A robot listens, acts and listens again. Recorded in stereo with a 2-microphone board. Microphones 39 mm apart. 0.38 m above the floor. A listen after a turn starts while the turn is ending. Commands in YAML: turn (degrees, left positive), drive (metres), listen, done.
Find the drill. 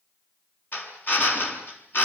turn: 55
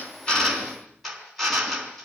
done: "Found it: a drill, straight ahead."